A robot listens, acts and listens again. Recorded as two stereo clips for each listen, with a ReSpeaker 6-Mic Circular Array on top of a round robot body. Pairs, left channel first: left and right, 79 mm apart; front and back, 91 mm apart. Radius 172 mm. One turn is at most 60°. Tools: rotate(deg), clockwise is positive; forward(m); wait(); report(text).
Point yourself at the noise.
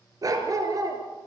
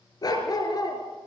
rotate(45)
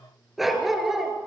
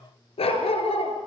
report("Found it: a dog barking, straight ahead, 2 to 4 m away.")